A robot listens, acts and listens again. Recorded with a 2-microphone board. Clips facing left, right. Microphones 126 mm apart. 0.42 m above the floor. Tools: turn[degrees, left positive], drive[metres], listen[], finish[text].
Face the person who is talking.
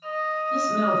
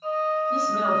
Thought: The woman speaking: about 55° right or 125° right.
Action: turn[-55]
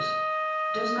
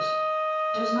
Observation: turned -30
Thought: So it is at 40° right.
Action: turn[-40]
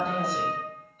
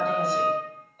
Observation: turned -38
Action: listen[]
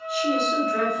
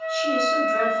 Action: listen[]
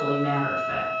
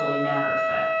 Action: finish[Found it: a woman speaking, straight ahead, 1 to 2 m away.]